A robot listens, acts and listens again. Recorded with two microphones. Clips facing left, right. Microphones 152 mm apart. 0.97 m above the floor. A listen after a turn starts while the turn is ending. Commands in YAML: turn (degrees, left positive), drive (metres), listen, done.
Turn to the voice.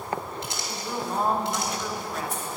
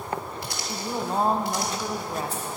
turn: -30
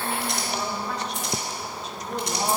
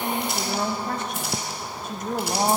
turn: -115
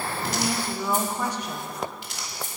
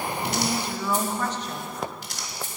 turn: 10
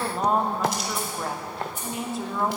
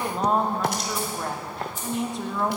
done: "Facing the woman speaking, 1 to 2 m away."